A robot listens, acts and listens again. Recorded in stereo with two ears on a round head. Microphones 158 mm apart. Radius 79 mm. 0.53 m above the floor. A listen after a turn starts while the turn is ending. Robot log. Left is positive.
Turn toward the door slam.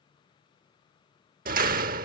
note: The door slam: about 50° right or 130° right.
cmd yaw -50
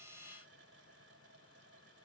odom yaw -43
cmd idle
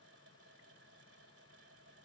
end: I heard a door slam, but can't make it out now. It was about 10° right or 85° right.